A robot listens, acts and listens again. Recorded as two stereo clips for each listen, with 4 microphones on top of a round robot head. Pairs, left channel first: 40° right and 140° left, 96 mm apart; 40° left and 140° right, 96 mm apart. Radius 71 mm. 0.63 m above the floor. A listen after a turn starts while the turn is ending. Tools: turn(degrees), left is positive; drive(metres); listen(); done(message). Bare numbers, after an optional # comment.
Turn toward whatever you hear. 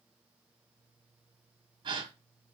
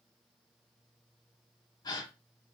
# The gasp: 90° left.
turn(90)
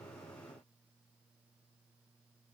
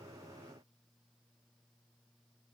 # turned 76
# Nothing new. It was at 15° left.
turn(15)
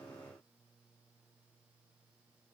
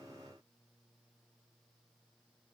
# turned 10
done("Facing where the gasp came from. I can't hear it now.")